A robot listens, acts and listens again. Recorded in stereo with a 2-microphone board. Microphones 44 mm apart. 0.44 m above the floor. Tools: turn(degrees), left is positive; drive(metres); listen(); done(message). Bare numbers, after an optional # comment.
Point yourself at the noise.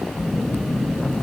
# The phone buzzing: about 50° right or 130° right.
turn(-50)
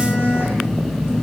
# So it is at 70° right.
turn(-70)
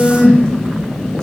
# The phone buzzing is now 20° left.
turn(20)
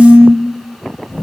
done("Facing the phone buzzing.")